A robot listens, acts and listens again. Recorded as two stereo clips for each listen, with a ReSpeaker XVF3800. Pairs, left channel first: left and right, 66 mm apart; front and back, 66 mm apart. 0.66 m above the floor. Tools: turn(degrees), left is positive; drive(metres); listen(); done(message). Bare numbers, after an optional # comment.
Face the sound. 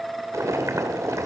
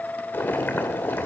# The boiling: 55° right.
turn(-55)
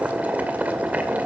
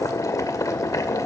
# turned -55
# The boiling is now 25° right.
turn(-25)
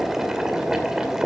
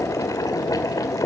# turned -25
# The boiling is now 10° right.
turn(-10)
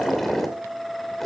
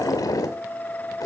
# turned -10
done("Facing the boiling.")